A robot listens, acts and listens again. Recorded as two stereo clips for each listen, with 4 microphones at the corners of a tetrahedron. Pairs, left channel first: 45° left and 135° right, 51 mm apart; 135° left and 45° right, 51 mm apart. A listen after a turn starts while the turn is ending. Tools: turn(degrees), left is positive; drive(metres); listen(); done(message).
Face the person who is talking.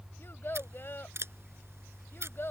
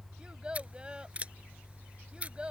turn(degrees=20)
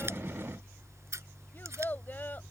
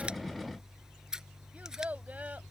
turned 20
done("Found it: a child speaking, straight ahead.")